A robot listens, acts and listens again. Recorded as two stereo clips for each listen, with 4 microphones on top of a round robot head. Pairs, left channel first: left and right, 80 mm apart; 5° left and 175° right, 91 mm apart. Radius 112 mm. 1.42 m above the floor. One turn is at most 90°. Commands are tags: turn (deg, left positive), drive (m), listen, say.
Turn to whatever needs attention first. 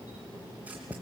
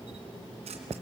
<listen/>
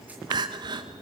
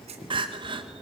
<turn deg="-90"/>
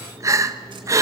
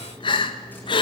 <turn deg="-35"/>
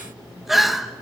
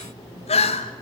<say>Found it: crying, straight ahead.</say>